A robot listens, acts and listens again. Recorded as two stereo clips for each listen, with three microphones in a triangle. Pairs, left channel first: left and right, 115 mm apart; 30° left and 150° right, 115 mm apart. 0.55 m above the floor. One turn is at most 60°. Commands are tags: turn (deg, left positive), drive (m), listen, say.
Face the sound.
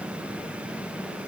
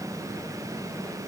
<listen/>
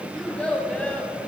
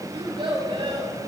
<turn deg="60"/>
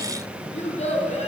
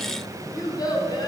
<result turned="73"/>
<turn deg="60"/>
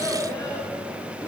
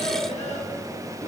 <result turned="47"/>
<turn deg="35"/>
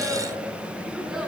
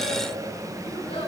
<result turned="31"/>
<say>Facing the child speaking.</say>